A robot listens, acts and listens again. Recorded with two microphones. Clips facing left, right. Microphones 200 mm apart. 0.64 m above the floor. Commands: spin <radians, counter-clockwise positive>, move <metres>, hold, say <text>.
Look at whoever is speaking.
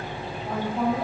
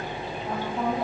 spin 0.52
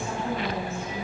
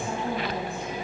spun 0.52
spin -0.26
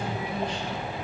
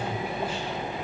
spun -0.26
hold
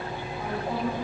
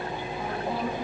spin -0.17
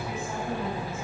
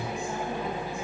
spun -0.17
hold
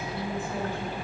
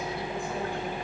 hold
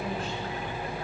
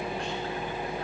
say Facing where the woman speaking came from. I can't hear it now.